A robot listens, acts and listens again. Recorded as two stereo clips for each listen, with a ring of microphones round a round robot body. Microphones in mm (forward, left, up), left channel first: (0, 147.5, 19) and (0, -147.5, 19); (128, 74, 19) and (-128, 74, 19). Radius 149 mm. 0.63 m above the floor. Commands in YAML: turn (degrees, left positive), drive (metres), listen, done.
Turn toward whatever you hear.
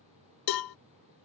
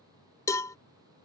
turn: 80
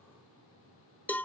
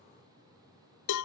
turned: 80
done: "Facing the cowbell."